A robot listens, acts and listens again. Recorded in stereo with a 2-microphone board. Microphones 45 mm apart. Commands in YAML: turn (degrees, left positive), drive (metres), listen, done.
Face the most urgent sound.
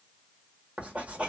listen: true
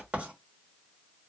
listen: true
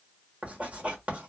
done: "I can't make out anything urgent to turn to."